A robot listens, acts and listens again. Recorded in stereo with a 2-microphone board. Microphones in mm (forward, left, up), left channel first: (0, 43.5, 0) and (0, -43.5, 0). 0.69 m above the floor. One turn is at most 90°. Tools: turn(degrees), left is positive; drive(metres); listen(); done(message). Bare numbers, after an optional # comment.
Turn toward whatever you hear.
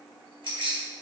turn(-90)
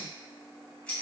# So it is at 15° left.
turn(15)
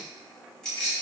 # The keys jangling is now 10° left.
turn(10)
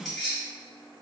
done("Facing the keys jangling, 2 to 4 m away.")